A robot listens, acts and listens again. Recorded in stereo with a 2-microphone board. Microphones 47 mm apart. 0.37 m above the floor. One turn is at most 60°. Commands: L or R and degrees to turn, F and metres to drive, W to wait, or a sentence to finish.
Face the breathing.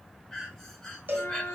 L30
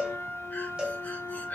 W
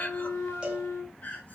L60
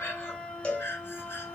L60
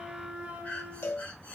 L35
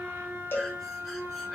W
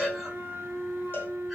W
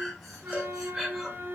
Facing the breathing, 1 to 2 m away.